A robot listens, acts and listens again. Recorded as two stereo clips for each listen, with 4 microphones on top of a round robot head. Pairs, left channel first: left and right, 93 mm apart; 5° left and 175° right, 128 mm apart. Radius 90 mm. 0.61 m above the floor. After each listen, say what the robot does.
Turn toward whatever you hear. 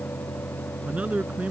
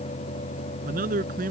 Turn 170° right.
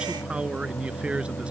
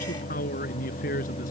Turn 10° right.
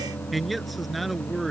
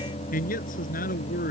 Found it: a man speaking, straight ahead.